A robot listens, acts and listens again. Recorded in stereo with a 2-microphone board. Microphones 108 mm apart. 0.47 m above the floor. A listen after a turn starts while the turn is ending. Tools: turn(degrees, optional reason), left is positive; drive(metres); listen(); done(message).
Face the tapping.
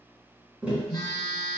turn(degrees=-30)
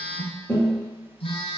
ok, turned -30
turn(degrees=20, reason="So it is at 20° left.")
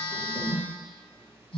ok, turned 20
listen()
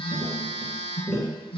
done("Facing the tapping, 1 to 2 m away.")